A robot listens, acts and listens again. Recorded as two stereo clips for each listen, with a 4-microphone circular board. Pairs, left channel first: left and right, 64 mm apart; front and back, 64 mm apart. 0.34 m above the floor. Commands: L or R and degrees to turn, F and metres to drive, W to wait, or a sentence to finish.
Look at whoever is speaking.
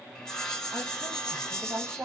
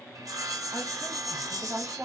R130
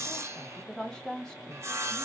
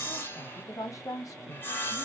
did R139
L10
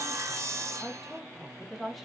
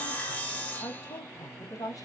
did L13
Facing the woman speaking, 1 to 2 m away.